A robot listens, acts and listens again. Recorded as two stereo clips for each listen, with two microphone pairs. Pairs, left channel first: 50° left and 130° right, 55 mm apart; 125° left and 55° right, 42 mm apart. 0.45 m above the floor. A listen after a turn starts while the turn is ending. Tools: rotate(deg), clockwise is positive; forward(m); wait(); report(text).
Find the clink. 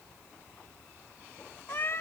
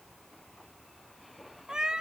wait()
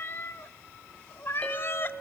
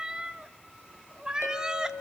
rotate(-120)
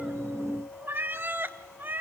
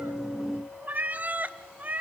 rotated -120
wait()
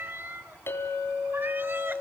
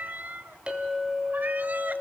rotate(-15)
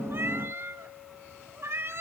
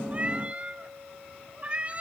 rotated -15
wait()
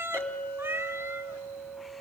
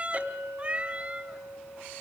report("Found it: a clink, straight ahead.")